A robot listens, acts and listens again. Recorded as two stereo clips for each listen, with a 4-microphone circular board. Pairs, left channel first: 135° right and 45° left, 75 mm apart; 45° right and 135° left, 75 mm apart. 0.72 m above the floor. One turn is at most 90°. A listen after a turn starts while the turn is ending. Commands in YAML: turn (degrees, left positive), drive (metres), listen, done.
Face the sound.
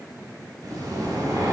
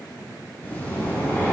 turn: 20
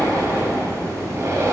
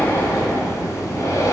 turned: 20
done: "Facing the breathing."